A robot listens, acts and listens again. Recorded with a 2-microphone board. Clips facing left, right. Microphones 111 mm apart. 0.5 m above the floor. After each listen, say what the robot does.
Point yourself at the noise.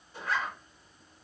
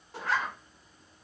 Turn 90° right.
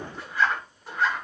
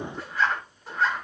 Found it: a zipper, straight ahead, 1 to 2 m away.